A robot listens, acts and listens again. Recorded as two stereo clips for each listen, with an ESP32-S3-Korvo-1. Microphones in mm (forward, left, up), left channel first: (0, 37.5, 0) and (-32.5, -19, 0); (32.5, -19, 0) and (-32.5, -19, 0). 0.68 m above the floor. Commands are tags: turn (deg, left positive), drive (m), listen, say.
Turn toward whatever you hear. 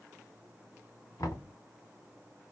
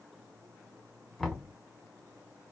<turn deg="85"/>
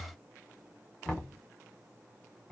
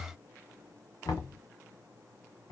<turn deg="-15"/>
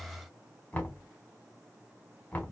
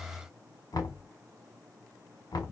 <say>Found it: knocking, straight ahead, 1 to 2 m away.</say>